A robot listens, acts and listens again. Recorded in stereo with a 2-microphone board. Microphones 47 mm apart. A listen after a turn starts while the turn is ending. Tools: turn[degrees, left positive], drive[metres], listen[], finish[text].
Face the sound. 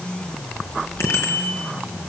Thought: The bicycle bell: about 65° left or 115° left.
Action: turn[65]
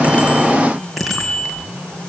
Action: finish[Facing the bicycle bell.]